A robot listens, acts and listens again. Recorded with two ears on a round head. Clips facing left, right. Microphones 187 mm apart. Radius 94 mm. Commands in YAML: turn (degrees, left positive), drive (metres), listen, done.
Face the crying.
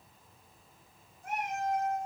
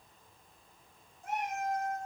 listen: true
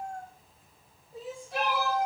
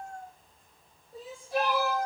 turn: 30
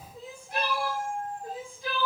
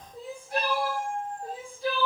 turn: -30
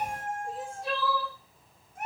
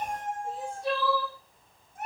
done: "Found it: crying, straight ahead."